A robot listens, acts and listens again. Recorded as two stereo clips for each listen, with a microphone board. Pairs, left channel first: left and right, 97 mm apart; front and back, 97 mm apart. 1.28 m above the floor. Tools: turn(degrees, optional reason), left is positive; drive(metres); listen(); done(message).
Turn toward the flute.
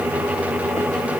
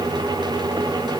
listen()
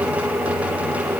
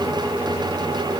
listen()
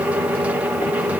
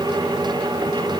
done("I can't make out a flute.")